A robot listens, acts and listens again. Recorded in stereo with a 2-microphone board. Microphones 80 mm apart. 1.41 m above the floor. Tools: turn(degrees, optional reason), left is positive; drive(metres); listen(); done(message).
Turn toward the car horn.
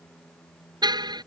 turn(degrees=-65, reason="The car horn: about 65° right or 115° right.")
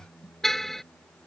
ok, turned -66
done("Found it: a car horn, straight ahead.")